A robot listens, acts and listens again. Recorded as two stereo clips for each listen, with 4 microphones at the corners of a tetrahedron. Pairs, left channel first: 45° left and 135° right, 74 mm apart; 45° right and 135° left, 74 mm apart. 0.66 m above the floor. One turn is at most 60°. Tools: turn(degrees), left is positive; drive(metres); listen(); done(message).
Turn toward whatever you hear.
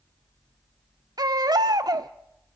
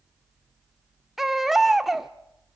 turn(degrees=-60)
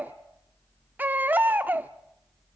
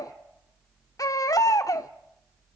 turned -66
turn(degrees=-60)
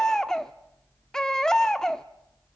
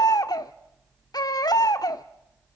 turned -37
turn(degrees=-35)
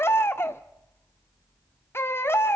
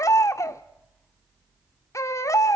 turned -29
done("Facing the baby crying.")